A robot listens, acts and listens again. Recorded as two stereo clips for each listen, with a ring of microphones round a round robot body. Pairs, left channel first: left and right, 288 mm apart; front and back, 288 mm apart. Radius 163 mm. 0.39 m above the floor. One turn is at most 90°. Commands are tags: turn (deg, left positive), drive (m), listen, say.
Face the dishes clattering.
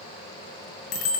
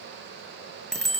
<listen/>
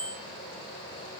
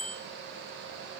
<listen/>
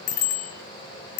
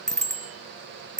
<say>I can't make out dishes clattering to turn to.</say>